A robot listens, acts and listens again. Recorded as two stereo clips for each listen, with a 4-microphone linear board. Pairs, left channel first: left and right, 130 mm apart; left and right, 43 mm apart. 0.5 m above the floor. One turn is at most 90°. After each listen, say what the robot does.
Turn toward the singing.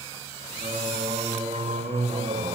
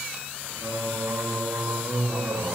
Turn 90° right.
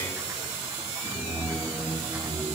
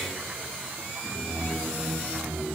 Facing the singing.